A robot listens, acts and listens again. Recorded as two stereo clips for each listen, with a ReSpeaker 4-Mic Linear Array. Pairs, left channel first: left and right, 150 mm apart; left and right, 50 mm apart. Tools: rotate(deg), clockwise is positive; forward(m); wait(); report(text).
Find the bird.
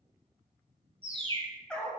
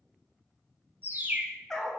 rotate(35)
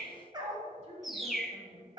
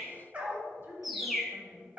report("Facing the bird, under 1 m away.")